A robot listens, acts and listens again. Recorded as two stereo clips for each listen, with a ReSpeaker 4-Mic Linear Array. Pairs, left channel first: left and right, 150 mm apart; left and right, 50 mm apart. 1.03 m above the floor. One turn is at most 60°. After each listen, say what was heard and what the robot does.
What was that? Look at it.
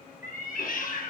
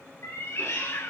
The cat meowing: about 70° left or 110° left. Turn 60° left.
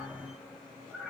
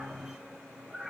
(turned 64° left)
Facing the cat meowing.